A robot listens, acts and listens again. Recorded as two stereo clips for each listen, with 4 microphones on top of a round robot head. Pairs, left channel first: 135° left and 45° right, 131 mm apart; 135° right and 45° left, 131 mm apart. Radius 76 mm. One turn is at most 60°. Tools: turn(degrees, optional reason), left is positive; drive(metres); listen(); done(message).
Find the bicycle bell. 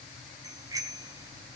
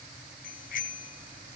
turn(degrees=-60, reason="The bicycle bell: 110° right.")
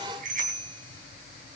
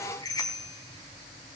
turn(degrees=-60, reason="The bicycle bell is now 70° right.")
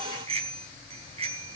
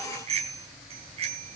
done("Found it: a bicycle bell, straight ahead.")